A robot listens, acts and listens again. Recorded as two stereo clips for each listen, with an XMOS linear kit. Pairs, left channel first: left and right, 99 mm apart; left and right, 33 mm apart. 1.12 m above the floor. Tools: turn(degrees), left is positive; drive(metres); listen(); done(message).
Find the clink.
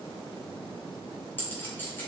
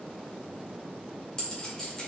turn(degrees=20)
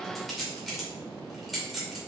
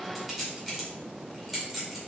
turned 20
done("Found it: a clink, straight ahead.")